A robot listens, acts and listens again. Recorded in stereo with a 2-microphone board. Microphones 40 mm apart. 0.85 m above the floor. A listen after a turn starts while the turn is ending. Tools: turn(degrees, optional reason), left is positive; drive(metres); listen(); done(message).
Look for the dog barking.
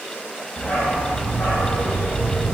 turn(degrees=90)
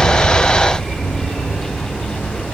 turn(degrees=25, reason="So it is at 25° left.")
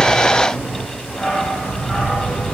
turn(degrees=20, reason="The dog barking is now 20° left.")
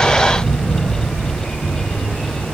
done("Found it: a dog barking, straight ahead, 2 to 4 m away.")